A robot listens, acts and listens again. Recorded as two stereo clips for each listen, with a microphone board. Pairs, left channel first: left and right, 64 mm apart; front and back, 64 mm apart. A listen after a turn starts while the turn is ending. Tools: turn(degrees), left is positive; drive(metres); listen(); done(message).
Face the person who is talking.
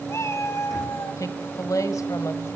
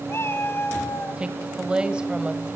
turn(degrees=105)
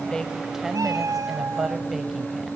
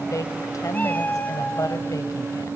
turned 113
done("Facing the woman speaking, 1 to 2 m away.")